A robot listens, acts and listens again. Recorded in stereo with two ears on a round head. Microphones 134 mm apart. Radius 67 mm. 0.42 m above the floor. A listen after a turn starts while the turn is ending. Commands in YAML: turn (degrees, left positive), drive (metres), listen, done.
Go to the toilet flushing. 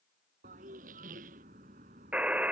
turn: -60
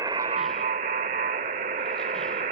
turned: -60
listen: true
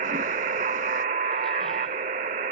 listen: true
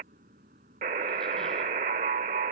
done: "I heard a toilet flushing, but can't make it out now. It was about straight ahead or 60° right. I did not reach it."